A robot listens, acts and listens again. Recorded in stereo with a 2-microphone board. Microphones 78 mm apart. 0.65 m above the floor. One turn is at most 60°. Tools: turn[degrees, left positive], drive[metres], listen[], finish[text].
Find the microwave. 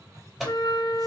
Action: turn[30]
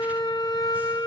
Action: listen[]
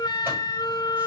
Action: listen[]
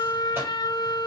Action: finish[I heard a microwave, but can't make it out now. It was about 30° right or 150° left.]